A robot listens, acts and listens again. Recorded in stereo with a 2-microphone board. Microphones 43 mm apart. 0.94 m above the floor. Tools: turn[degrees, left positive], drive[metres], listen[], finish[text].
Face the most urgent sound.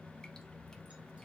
Action: listen[]
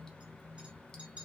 Action: listen[]
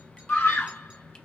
Thought: The scream: about 65° left or 115° left.
Action: turn[65]
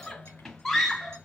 Thought: So it is at 10° left.
Action: turn[10]
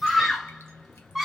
Action: finish[Facing the scream.]